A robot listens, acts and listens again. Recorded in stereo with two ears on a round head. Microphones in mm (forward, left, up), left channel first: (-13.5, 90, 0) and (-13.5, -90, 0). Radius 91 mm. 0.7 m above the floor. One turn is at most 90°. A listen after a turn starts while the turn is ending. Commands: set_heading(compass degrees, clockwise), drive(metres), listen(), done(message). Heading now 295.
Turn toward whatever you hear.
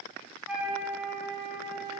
set_heading(325)
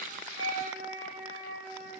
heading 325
set_heading(55)
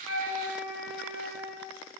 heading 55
set_heading(105)
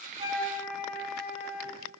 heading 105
done("Facing the flute, 2 to 4 m away.")